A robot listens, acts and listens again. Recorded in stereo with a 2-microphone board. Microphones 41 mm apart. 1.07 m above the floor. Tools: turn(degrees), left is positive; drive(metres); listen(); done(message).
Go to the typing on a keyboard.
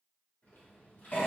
turn(degrees=60)
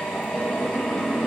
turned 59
listen()
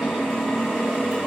listen()
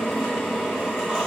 done("I heard typing on a keyboard, but can't make it out now. It was about straight ahead or 60° left. I did not reach it.")